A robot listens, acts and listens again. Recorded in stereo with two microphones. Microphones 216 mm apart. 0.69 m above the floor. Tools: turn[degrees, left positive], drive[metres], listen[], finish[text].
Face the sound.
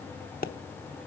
Thought: The pop: about 45° left or 135° left.
Action: turn[45]
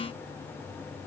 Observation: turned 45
Action: listen[]
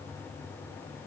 Action: finish[I heard a pop, but can't make it out now. It was about straight ahead or 90° left.]